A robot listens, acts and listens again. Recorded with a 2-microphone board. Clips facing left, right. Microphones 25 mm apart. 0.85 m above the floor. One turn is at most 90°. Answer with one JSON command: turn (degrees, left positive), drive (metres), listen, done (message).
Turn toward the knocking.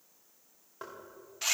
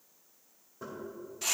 {"turn": 65}
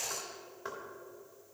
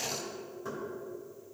{"turn": 50}
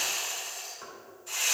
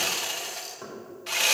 {"done": "Facing the knocking, 2 to 4 m away."}